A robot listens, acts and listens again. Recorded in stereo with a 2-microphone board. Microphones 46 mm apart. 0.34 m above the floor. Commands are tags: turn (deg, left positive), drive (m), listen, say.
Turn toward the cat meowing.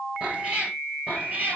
<turn deg="-35"/>
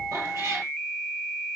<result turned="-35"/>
<turn deg="-100"/>
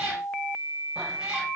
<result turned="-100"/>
<turn deg="-20"/>
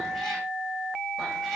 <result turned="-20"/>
<listen/>
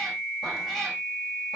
<listen/>
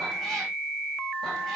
<say>Facing where the cat meowing came from. I can't hear it now.</say>